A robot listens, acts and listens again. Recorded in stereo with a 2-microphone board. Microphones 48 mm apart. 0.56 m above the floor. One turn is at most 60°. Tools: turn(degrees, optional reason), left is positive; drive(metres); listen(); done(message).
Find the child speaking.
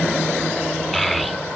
turn(degrees=30)
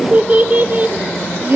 turn(degrees=-40, reason="So it is at 40° right.")
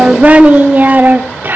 turn(degrees=-45, reason="The child speaking is now 45° right.")
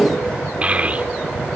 turn(degrees=-25, reason="The child speaking is now 25° right.")
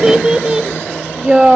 turn(degrees=-15, reason="The child speaking is now 15° right.")
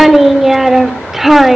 done("Found it: a child speaking, straight ahead.")